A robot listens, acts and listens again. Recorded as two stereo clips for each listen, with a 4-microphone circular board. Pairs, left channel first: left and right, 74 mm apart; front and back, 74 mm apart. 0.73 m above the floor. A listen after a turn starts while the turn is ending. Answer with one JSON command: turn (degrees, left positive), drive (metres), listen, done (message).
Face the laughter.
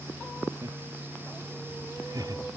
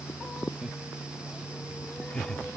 {"turn": -75}
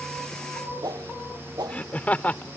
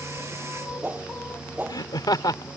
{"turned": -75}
{"turn": 25}
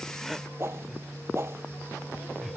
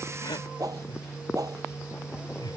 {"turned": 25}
{"done": "Found it: laughter, straight ahead."}